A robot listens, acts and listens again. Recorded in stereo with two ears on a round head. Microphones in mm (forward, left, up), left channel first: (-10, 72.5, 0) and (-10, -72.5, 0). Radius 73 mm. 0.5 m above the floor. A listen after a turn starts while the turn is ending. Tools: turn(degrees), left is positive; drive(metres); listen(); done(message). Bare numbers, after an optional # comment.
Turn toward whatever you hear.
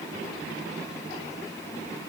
listen()
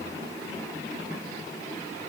listen()
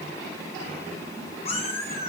# The cat meowing: about 45° left or 135° left.
turn(45)
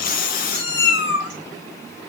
# So it is at 95° left.
turn(95)
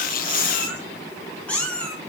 # The cat meowing is now 10° left.
turn(10)
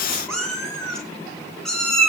done("Found it: a cat meowing, straight ahead.")